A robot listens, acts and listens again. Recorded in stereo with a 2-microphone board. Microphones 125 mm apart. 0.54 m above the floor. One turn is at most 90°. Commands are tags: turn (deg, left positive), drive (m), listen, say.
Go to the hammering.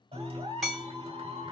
<turn deg="30"/>
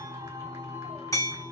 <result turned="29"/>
<turn deg="90"/>
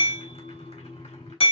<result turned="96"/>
<turn deg="55"/>
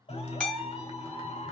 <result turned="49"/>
<turn deg="10"/>
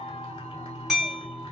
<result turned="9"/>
<drive m="1.0"/>
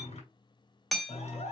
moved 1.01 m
<drive m="1.0"/>
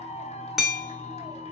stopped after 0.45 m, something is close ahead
<say>Arrived at the hammering, straight ahead.</say>